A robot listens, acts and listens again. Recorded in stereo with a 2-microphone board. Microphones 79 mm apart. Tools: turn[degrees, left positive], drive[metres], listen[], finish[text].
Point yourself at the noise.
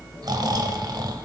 Thought: The snoring: about 55° right or 125° right.
Action: turn[-55]
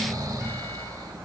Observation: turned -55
Thought: So it is at 55° right.
Action: turn[-55]
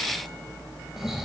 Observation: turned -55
Action: finish[Found it: snoring, straight ahead.]